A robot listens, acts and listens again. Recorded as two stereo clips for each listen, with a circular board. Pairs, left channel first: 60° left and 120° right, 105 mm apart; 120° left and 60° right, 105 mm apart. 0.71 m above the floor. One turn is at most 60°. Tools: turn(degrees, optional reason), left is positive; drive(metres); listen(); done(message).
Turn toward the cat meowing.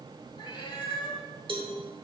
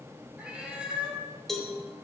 turn(degrees=20, reason="The cat meowing: 20° left.")
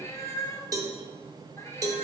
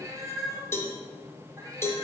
done("Facing the cat meowing.")